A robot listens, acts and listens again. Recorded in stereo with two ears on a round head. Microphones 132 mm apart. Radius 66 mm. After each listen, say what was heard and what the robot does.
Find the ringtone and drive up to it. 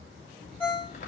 Turn 30° left.
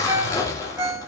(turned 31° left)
So it is at 20° right. Turn 20° right.
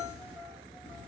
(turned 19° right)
Keep listening.
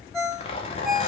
Drive 1.0 m forward.
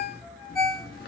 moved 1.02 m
Drive 1.0 m forward.
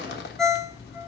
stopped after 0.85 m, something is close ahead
I am next to the ringtone.